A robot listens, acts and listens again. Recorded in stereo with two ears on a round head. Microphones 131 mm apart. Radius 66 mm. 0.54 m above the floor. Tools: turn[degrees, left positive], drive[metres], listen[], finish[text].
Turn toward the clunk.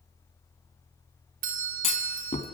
Thought: The clunk: about 45° left or 135° left.
Action: turn[45]
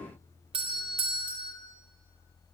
Action: listen[]
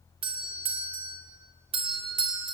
Action: finish[I heard a clunk, but can't make it out now. It was about straight ahead or 90° left.]